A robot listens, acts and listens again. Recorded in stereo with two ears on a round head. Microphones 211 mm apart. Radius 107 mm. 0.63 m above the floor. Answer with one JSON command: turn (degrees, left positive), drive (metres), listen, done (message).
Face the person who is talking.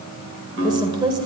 {"turn": -20}
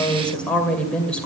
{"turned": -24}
{"done": "Facing the woman speaking."}